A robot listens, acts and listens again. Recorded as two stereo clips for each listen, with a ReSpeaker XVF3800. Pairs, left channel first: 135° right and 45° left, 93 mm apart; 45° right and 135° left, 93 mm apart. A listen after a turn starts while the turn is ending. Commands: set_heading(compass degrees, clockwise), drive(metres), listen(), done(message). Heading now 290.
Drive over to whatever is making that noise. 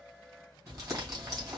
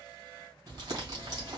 set_heading(195)
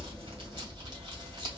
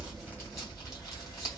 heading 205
set_heading(195)
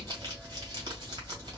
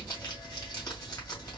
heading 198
drive(1.0)
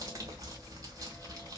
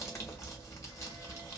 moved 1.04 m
drive(1.0)
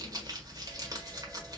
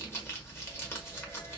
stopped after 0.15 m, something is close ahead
set_heading(188)
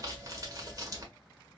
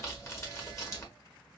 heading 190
done("Arrived at the crumpling, straight ahead.")